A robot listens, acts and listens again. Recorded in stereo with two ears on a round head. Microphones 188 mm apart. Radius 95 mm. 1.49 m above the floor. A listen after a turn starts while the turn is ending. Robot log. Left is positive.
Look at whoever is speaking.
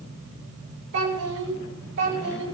note: The child speaking: about 70° right or 110° right.
cmd yaw -70
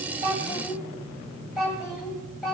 end: Found it: a child speaking, straight ahead.